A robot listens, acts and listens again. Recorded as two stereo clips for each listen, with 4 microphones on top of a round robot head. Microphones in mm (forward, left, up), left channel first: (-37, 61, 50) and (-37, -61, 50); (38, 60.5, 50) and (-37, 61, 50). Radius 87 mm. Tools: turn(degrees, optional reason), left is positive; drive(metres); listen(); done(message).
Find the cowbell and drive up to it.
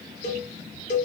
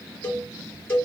turn(degrees=60, reason="The cowbell: 60° left.")
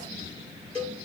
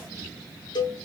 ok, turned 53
drive(metres=1.0)
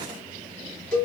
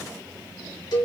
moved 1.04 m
drive(metres=1.0)
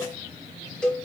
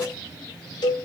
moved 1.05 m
drive(metres=1.0)
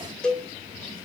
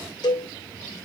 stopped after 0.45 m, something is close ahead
done("I am next to the cowbell.")